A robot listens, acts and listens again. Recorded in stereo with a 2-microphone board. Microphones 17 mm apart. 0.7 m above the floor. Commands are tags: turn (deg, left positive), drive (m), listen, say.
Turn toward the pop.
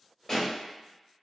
<turn deg="20"/>
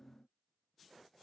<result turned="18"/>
<listen/>
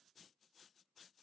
<say>I heard a pop, but can't make it out now. It was about straight ahead or 140° left.</say>